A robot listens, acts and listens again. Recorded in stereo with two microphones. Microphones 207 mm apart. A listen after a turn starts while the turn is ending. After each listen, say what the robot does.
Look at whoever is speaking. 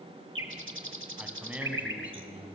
Turn 30° right.
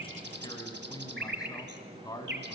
Turn 20° left.
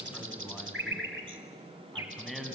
Found it: a man speaking, straight ahead, 2 to 4 m away.